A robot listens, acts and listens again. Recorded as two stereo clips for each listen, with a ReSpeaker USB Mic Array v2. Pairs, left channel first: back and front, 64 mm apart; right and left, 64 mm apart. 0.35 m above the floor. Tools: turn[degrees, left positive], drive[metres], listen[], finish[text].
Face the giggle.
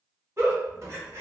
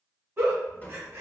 Thought: The giggle: 45° left.
Action: turn[45]
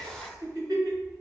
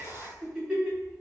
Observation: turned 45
Thought: The giggle is now 15° left.
Action: turn[15]
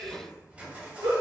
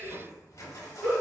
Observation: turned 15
Action: finish[Facing the giggle.]